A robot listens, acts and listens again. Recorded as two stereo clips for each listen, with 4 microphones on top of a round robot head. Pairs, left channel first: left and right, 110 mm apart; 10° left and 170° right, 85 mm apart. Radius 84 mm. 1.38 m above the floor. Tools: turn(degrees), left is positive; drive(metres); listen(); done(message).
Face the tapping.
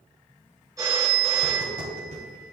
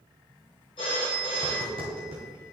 turn(degrees=-135)
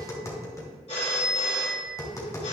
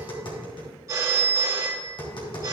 turn(degrees=30)
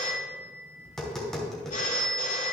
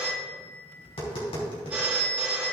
done("Found it: tapping, straight ahead.")